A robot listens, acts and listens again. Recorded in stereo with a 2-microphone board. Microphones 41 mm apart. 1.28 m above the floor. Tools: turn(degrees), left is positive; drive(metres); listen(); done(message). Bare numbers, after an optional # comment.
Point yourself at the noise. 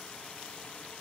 listen()
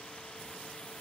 listen()
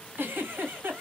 # The giggle: about 55° right or 125° right.
turn(-55)
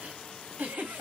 # So it is at 60° right.
turn(-60)
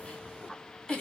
# The giggle is now 20° left.
turn(20)
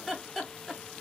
done("Found it: a giggle, straight ahead.")